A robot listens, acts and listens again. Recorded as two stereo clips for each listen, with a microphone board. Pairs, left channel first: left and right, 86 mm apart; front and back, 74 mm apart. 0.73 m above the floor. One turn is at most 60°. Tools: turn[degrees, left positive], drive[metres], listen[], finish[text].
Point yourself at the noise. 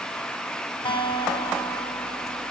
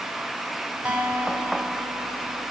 Thought: The guitar: 105° left.
Action: turn[60]
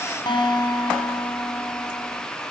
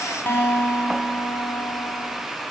Thought: The guitar is now 60° left.
Action: turn[60]
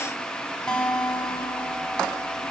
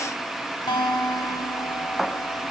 Thought: The guitar is now 10° left.
Action: turn[10]
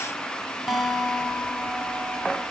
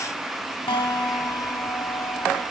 Action: finish[Facing the guitar, 2 to 4 m away.]